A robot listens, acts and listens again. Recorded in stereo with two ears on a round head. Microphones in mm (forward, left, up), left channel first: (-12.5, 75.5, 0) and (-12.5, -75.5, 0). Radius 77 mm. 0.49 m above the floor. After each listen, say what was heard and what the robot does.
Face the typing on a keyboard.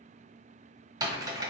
The typing on a keyboard: about 25° right or 155° right. Turn 25° right.
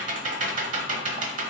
So it is at 130° right. Turn 130° right.
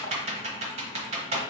The typing on a keyboard is now 40° right. Turn 40° right.
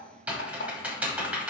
The typing on a keyboard is now 10° right. Turn 10° right.
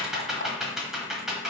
Found it: typing on a keyboard, straight ahead.